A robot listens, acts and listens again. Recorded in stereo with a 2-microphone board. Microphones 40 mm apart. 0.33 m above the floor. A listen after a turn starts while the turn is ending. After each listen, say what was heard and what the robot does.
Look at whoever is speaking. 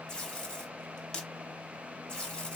Keep listening.
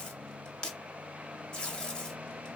Keep listening.
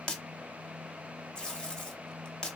I can't make out anyone speaking to turn to.